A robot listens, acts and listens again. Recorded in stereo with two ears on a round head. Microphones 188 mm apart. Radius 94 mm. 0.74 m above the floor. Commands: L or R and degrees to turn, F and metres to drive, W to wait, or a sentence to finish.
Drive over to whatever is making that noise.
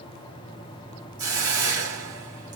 R60
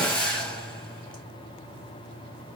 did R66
F1.0
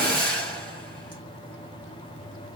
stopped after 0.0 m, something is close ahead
Something is in my way. I am facing the hiss but have not reached it.